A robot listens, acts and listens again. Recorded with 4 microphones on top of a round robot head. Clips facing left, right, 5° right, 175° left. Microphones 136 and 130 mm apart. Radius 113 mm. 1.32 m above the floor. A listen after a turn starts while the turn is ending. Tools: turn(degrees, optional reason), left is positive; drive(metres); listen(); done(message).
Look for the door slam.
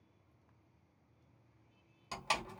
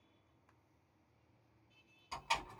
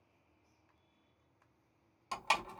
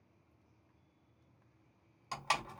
turn(degrees=60, reason="The door slam: 60° left.")
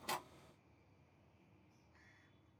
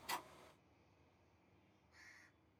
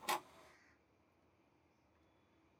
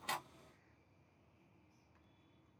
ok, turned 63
done("I heard a door slam from this way, but can't make it out now.")